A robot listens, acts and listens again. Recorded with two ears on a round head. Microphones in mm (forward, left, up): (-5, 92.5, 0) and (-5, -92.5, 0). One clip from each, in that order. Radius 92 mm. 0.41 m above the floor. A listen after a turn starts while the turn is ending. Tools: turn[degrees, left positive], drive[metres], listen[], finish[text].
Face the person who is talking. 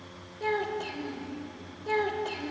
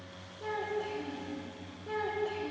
Thought: The child speaking: about 40° left or 140° left.
Action: turn[40]
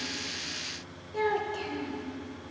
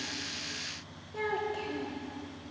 Thought: So it is at 10° left.
Action: turn[10]
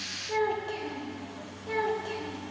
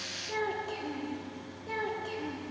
Action: finish[Found it: a child speaking, straight ahead, under 1 m away.]